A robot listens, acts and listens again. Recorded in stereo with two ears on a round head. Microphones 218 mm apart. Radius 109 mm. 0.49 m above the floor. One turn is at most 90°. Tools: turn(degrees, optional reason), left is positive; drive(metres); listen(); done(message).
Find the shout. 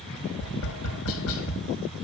listen()
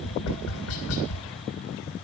listen()
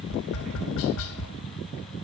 done("I can't make out a shout to turn to.")